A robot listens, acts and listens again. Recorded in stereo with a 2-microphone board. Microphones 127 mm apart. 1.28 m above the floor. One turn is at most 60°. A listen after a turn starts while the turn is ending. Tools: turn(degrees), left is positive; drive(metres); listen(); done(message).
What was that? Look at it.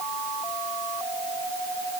listen()
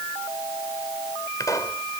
turn(degrees=25)
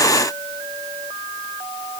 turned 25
listen()
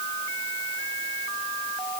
done("I heard a pop, but can't make it out now. It was about straight ahead or 130° left.")